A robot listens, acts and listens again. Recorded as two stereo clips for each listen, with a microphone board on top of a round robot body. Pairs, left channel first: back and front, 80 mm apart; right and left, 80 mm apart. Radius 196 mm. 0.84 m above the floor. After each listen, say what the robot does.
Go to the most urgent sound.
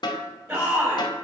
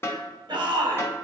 Turn 60° left.
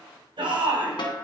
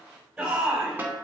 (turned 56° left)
Drive 1.0 m forward.
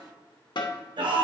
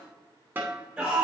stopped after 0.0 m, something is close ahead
Something is in my way. I am facing the shout but have not reached it.